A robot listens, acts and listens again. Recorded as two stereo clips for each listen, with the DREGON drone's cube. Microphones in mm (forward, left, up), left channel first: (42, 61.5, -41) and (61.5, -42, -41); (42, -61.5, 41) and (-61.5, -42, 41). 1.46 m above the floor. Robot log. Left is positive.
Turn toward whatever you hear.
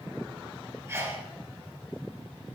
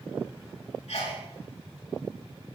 note: The sneeze: 15° right.
cmd yaw -15
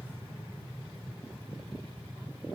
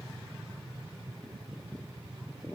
end: I heard a sneeze from this way, but can't make it out now.